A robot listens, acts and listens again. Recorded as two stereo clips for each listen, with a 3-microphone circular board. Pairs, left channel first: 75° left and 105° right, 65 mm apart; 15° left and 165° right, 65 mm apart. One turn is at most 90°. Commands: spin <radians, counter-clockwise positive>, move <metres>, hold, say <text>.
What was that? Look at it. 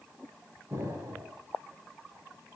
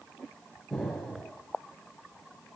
spin -1.22
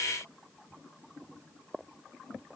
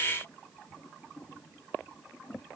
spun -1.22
say Facing where the explosion came from. I can't hear it now.